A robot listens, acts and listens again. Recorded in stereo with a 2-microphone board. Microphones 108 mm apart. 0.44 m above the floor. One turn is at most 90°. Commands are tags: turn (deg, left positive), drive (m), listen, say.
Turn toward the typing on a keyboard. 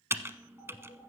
<turn deg="-25"/>
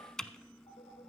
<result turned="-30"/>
<say>Facing the typing on a keyboard, under 1 m away.</say>